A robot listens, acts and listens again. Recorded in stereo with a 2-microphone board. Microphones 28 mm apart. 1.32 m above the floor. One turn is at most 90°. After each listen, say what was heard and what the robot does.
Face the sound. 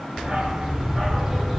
Turn 30° left.
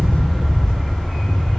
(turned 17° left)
Turn 30° left.
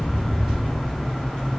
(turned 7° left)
The dog barking: about 20° left or 160° left. Turn 20° left.
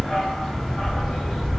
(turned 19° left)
Turn 30° left.
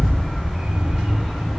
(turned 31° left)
So it is at 25° right. Turn 25° right.
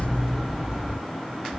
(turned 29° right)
Facing the dog barking, 2 to 4 m away.